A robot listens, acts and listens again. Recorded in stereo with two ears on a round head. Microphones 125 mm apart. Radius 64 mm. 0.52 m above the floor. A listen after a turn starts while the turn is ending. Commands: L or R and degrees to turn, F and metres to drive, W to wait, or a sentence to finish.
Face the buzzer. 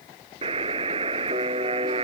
R35
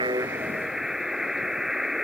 Found it: a buzzer, straight ahead.